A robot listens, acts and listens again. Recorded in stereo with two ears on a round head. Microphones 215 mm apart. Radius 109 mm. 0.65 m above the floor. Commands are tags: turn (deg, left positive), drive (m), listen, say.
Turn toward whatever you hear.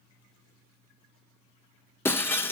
<turn deg="30"/>
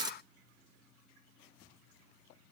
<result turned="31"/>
<turn deg="-20"/>
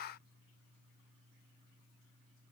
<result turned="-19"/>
<say>I heard breaking glass from this way, but can't make it out now.</say>